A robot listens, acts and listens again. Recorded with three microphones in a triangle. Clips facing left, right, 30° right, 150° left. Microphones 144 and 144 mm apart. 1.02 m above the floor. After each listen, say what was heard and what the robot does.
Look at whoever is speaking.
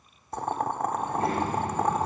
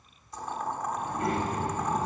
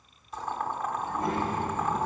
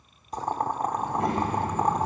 The child speaking: 145° left. Turn 145° left.
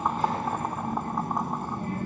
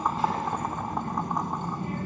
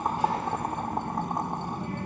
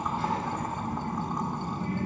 The child speaking is now 45° left. Turn 45° left.
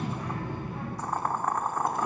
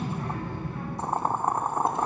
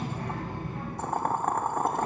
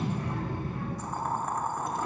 The child speaking is now 15° left. Turn 15° left.
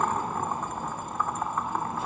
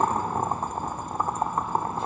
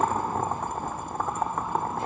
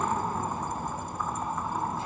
Facing the child speaking, over 4 m away.